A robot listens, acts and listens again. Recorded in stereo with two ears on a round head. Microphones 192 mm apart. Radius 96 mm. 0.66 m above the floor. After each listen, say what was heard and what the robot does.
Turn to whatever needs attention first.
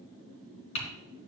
Keep listening.
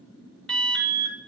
Turn 30° left.
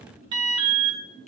So it is at 25° right. Turn 25° right.
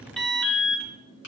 Found it: an alarm, straight ahead, 1 to 2 m away.